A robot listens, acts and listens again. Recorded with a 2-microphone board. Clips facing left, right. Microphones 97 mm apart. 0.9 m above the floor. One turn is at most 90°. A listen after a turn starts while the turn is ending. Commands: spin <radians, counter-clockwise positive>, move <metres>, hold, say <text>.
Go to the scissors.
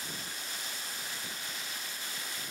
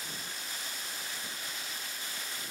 hold
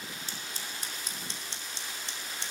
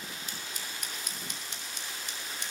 spin 0.52
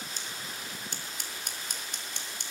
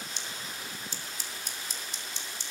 spin 1.57
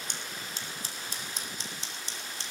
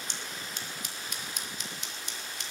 spin 0.61
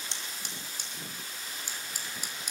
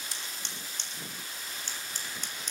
spin 0.17
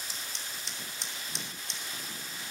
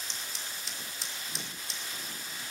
move 1.0
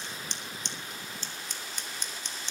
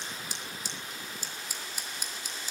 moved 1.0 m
spin -0.17
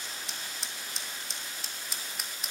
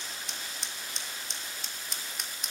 move 1.0
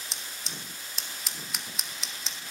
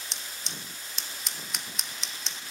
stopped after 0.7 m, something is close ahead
say I am next to the scissors.